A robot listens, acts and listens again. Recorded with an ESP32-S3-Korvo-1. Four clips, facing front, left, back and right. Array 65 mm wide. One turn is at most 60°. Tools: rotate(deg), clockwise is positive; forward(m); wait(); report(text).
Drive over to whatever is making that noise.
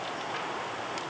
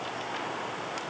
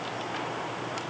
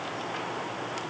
wait()
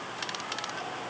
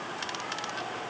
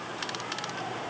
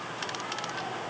wait()
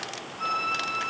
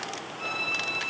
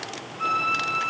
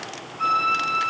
rotate(60)
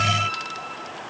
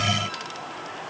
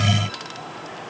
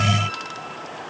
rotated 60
rotate(40)
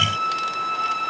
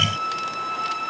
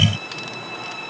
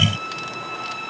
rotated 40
rotate(-20)
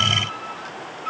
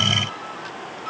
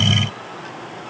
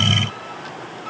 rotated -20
wait()
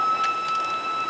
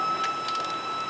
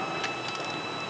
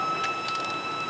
forward(1.0)
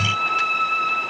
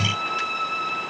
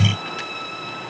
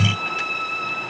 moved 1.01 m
forward(1.0)
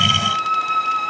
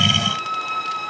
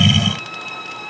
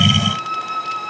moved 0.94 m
forward(1.0)
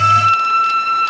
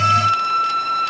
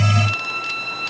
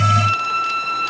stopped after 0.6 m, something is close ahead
report("Arrived at the violin, straight ahead.")